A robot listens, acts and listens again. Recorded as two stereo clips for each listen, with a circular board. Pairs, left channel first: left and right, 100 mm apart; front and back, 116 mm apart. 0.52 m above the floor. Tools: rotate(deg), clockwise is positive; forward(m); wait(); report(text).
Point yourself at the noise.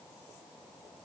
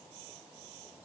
wait()
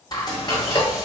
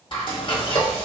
rotate(-45)
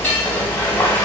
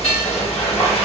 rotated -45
rotate(-20)
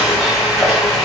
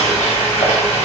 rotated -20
report("Found it: frying, straight ahead, 1 to 2 m away.")